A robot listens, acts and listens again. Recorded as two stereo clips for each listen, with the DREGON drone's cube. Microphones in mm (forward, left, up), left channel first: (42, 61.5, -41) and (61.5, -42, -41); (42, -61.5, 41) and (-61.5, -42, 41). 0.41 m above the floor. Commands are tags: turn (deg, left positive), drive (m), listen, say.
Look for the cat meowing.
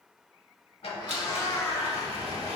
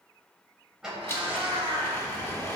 <turn deg="155"/>
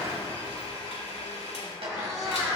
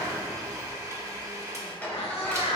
<turn deg="-15"/>
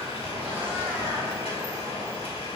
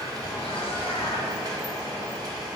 <listen/>
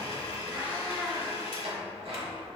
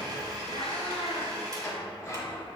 <say>Facing the cat meowing.</say>